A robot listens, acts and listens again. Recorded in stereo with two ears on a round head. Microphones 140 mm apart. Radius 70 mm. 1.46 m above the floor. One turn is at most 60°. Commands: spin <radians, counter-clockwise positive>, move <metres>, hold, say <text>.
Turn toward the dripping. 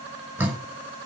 spin -0.52
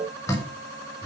spin 0.35
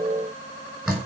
say Found it: dripping, straight ahead, over 4 m away.